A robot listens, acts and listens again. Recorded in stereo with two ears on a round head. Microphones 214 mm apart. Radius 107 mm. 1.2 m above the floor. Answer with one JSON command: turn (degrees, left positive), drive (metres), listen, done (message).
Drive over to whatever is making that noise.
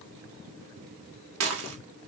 {"turn": -65}
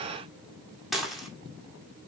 {"drive": 1.0}
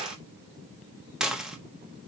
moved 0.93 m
{"drive": 1.0}
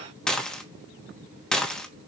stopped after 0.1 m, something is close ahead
{"done": "I am next to the dishes clattering."}